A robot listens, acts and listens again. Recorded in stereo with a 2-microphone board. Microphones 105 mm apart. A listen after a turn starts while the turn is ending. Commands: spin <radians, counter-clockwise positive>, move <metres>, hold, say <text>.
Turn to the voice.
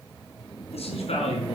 spin 1.57
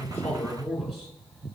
say Facing the man speaking, over 4 m away.